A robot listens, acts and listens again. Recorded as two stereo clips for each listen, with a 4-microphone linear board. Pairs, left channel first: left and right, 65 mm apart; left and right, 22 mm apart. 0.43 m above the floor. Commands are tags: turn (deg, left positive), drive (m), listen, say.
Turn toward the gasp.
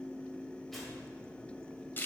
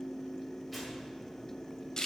<listen/>
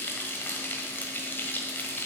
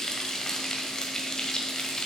<listen/>
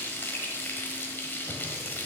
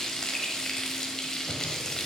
<say>I can't make out a gasp, only frying.</say>